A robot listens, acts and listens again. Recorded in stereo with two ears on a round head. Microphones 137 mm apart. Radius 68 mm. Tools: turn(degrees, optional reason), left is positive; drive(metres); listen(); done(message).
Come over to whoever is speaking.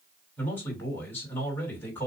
turn(degrees=30)
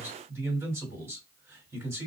turn(degrees=-20, reason="So it is at 20° right.")
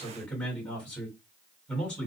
drive(metres=1.0)
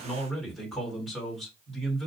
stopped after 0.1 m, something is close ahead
done("Something is in my way. I am facing the man speaking but have not reached it.")